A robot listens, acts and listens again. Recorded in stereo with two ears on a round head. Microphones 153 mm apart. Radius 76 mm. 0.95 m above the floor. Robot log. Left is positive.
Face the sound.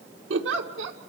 cmd yaw -90
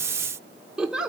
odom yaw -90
end: Found it: a giggle, straight ahead.